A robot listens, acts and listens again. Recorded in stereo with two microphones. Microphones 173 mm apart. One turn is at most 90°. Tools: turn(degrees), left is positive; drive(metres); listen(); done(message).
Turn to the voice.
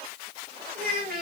turn(degrees=-60)
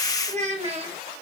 turn(degrees=-35)
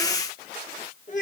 turn(degrees=50)
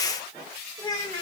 turn(degrees=25)
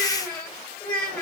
done("Facing the child speaking.")